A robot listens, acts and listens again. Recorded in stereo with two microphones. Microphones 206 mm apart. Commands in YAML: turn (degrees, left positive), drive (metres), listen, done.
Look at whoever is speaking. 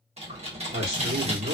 turn: -55
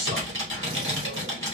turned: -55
turn: -60
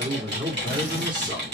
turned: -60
turn: -25
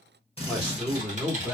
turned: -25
done: "Found it: a man speaking, straight ahead, 1 to 2 m away."